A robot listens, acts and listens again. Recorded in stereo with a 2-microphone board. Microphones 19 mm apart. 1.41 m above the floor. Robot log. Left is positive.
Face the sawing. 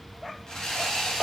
note: The sawing: about 35° left or 145° left.
cmd yaw +35
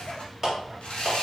note: So it is at 105° left.
cmd yaw +105
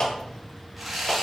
end: Found it: sawing, straight ahead, under 1 m away.